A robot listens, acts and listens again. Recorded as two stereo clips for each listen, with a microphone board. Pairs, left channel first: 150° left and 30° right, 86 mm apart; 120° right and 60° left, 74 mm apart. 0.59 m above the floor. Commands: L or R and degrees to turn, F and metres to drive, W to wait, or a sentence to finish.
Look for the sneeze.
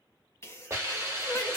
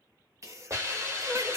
L95
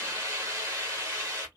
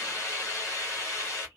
Facing where the sneeze came from. I can't hear it now.